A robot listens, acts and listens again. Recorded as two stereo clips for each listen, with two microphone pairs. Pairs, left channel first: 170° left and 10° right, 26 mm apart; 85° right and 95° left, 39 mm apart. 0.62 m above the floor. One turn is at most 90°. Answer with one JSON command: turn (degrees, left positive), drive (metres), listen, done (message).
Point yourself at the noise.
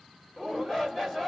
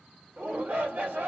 {"turn": 90}
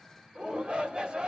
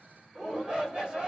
{"turn": 25}
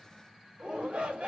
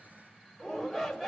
{"done": "Found it: a shout, straight ahead."}